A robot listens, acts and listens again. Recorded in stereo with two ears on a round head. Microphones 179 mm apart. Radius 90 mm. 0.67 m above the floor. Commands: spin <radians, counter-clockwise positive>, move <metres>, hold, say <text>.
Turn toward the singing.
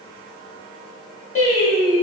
spin 0.61
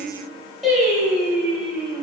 say Found it: singing, straight ahead, 1 to 2 m away.